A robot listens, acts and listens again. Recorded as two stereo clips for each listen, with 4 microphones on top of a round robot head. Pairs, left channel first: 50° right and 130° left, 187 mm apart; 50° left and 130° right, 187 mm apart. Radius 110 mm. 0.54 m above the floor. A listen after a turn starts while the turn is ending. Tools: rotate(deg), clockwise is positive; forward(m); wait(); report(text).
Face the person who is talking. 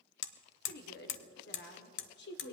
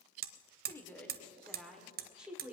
rotate(50)
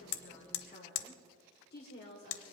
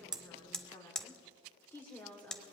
rotate(30)
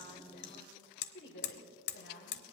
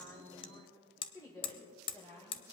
rotate(25)
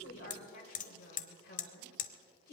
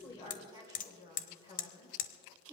rotate(10)
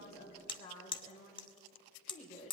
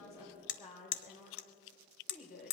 report("Found it: a woman speaking, straight ahead.")